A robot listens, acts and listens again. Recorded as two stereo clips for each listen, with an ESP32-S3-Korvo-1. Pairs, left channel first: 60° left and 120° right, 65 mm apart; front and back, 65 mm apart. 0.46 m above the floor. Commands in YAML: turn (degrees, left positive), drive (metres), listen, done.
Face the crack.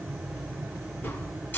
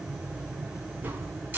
turn: 120
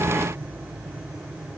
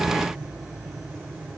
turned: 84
turn: 40
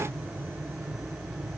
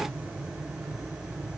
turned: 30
turn: 10
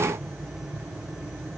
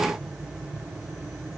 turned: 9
done: "I heard a crack from this way, but can't make it out now."